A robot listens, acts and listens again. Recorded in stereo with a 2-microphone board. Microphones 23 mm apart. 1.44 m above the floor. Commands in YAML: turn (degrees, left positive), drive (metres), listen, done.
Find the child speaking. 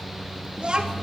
turn: -35
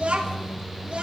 turn: -130
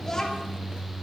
turn: 15
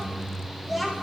turn: -10
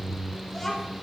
done: "Facing the child speaking."